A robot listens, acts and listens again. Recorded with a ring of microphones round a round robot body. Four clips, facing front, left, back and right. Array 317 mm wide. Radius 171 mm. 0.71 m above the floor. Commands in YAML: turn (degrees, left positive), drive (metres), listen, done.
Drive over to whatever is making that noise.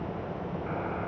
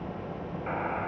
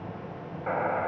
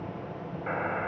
turn: -165
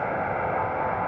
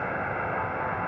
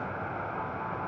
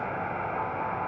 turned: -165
turn: 15
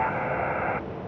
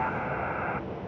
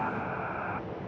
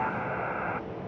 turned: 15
drive: 1.0
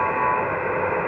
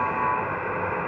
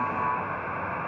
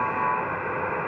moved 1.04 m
drive: 1.0
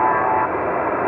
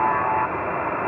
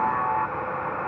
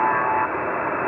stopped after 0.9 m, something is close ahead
turn: -15
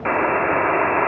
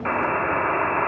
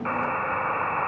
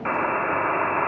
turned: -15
done: "I am next to the buzzer."